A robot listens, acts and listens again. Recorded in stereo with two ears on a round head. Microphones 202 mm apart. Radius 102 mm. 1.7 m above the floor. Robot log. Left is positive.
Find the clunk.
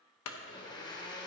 cmd yaw +90
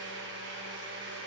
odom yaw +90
end: Facing where the clunk came from. I can't hear it now.